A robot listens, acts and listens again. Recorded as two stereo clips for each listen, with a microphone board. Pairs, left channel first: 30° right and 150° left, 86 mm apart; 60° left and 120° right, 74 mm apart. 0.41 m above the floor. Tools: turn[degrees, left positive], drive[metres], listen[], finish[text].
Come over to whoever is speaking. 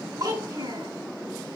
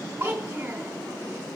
Thought: The child speaking: straight behind.
Action: turn[180]
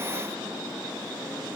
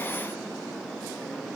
Action: listen[]
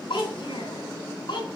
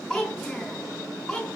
Thought: The child speaking is now 25° right.
Action: turn[-25]
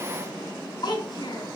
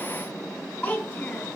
Thought: The child speaking is now 10° right.
Action: turn[-10]
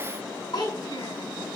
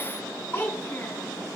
Action: drive[1.0]
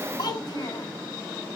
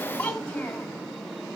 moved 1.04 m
Thought: The child speaking is now 10° right.
Action: turn[-10]
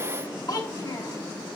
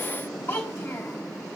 Action: drive[1.0]
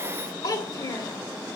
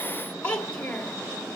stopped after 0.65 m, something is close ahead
Thought: The child speaking is now 10° right.
Action: turn[-10]
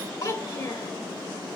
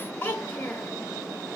Action: finish[Arrived at the child speaking, straight ahead.]